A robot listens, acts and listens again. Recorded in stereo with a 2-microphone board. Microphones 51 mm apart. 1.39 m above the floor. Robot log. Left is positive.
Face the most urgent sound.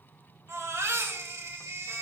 cmd yaw -90
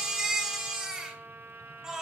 note: So it is at 10° right.
cmd yaw -10
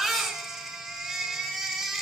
end: Found it: a baby crying, straight ahead.